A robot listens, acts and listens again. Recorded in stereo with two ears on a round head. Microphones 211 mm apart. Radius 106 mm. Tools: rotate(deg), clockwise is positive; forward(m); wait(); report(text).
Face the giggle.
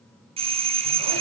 wait()
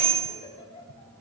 rotate(-30)
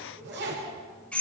wait()
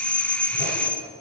wait()
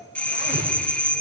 report("I heard a giggle, but can't make it out now. It was about straight ahead or 120° left.")